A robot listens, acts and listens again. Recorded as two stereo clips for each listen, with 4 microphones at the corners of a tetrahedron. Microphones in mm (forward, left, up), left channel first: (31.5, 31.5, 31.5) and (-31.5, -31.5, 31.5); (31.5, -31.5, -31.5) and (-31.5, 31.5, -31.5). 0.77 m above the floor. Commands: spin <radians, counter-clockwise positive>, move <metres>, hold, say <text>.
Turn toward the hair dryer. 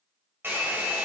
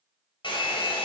spin -1.22
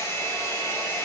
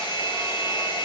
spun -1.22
spin -0.26
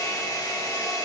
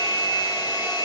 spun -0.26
say Found it: a hair dryer, straight ahead, 1 to 2 m away.